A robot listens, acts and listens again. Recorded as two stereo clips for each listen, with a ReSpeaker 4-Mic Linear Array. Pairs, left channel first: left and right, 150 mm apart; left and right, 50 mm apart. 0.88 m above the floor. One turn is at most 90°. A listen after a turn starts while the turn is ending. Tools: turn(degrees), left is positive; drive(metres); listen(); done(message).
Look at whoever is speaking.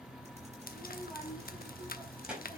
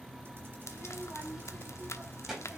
turn(degrees=-30)
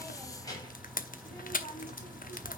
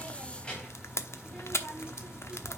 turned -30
turn(degrees=25)
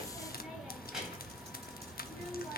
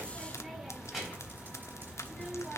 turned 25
done("Facing the child speaking, over 4 m away.")